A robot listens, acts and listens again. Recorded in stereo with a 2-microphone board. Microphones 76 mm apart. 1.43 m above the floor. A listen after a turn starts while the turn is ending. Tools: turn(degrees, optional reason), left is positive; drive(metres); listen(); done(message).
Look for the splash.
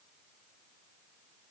listen()
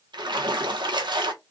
turn(degrees=-90)
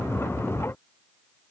done("Facing where the splash came from. I can't hear it now.")